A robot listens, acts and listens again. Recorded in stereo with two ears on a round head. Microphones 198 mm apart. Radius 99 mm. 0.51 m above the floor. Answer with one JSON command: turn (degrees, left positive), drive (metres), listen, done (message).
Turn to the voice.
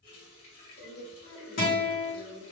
{"turn": 55}
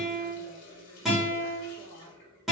{"listen": true}
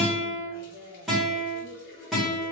{"turn": 30}
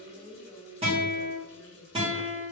{"done": "Facing the woman speaking, 1 to 2 m away."}